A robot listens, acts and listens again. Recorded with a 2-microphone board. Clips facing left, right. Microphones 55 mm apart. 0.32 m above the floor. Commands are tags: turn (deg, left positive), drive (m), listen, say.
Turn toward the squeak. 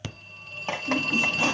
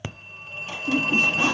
<turn deg="-40"/>
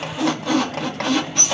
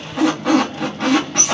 <turn deg="-95"/>
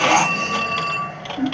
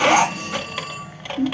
<turn deg="-10"/>
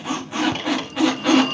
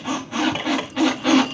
<say>Facing the squeak, 2 to 4 m away.</say>